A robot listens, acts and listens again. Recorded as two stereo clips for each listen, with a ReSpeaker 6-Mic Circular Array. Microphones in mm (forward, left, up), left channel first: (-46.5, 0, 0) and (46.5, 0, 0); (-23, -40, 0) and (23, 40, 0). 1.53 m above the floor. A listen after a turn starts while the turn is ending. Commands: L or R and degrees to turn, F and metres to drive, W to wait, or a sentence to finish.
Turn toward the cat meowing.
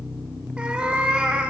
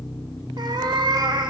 L75
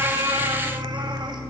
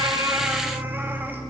W
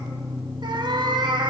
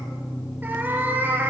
Facing the cat meowing, 1 to 2 m away.